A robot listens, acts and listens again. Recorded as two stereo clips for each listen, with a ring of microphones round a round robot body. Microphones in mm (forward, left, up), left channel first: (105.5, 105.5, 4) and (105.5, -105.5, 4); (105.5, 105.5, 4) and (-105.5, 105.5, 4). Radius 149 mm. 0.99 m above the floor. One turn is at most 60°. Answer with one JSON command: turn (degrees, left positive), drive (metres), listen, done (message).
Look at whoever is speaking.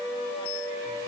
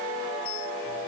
{"listen": true}
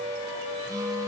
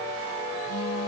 {"listen": true}
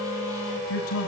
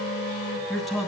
{"turn": 60}
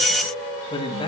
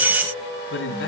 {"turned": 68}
{"turn": 25}
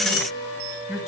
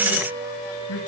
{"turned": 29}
{"done": "Facing the man speaking."}